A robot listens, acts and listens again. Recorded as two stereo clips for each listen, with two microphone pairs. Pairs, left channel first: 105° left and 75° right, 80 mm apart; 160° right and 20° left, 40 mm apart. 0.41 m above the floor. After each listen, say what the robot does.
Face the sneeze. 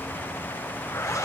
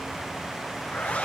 Keep listening.
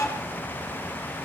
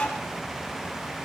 Keep listening.
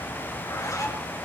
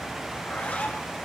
I can't make out a sneeze, only a zipper.